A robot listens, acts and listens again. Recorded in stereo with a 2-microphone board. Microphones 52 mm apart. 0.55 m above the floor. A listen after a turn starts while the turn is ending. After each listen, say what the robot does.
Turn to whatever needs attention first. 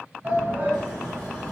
Turn 35° right.
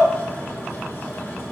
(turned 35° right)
Keep listening.
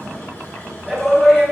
Facing the shout, 2 to 4 m away.